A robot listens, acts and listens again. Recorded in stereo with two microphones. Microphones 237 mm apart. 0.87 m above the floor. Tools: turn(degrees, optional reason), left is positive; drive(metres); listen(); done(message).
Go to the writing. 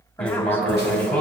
turn(degrees=30)
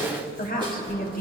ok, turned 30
turn(degrees=-25, reason="So it is at 25° right.")
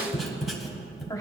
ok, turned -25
drive(metres=1.0)
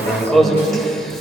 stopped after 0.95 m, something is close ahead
done("Arrived at the writing, straight ahead.")